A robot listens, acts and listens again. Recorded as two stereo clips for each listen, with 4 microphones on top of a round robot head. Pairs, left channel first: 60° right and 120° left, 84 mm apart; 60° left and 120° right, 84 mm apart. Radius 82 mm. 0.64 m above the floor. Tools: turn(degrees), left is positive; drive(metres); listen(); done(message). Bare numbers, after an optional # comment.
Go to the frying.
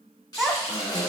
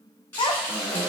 drive(1.0)
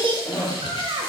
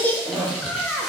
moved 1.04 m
listen()
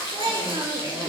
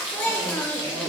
# The frying is now 15° right.
turn(-15)
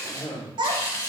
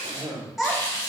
drive(1.0)
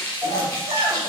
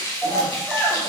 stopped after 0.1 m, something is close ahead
done("Arrived at the frying, straight ahead.")